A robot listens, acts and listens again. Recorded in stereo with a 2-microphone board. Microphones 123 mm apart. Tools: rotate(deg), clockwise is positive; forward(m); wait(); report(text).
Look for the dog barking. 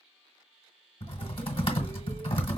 wait()
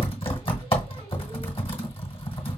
wait()
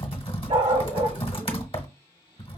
rotate(70)
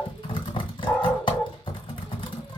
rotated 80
rotate(-10)
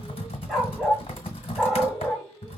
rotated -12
report("Found it: a dog barking, straight ahead.")